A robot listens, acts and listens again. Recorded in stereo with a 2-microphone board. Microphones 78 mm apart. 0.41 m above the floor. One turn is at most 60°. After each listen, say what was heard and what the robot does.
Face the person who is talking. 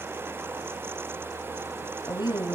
The woman speaking: about 70° left or 110° left. Turn 60° left.
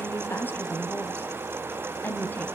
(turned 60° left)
So it is at 30° left. Turn 30° left.
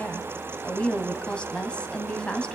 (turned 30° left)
The woman speaking is now 15° left. Turn 15° left.
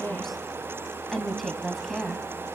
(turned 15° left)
Facing the woman speaking.